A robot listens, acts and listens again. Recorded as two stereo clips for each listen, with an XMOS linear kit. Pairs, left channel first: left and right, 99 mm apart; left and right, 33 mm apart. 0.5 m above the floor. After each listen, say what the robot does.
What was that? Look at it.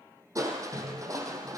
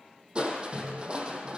Turn 35° right.
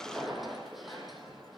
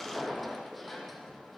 Facing the crushing.